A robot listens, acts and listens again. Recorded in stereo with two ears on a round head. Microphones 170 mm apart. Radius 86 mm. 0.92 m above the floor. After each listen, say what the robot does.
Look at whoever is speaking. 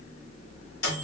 Keep listening.
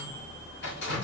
Keep listening.
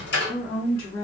Turn 55° left.
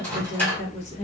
Turn 45° left.
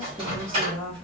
Turn 10° left.
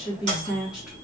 Found it: a woman speaking, straight ahead.